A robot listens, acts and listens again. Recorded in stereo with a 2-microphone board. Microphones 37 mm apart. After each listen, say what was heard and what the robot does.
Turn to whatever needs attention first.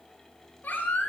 The baby crying: about 55° left or 125° left. Turn 55° left.
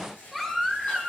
Facing the baby crying, 2 to 4 m away.